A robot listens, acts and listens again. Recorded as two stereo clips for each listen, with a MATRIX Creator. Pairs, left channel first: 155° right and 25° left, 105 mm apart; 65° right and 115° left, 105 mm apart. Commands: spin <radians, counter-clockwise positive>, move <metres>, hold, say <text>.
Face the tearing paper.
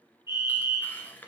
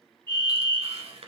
spin 2.27
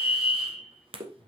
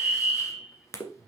say Facing the tearing paper, 1 to 2 m away.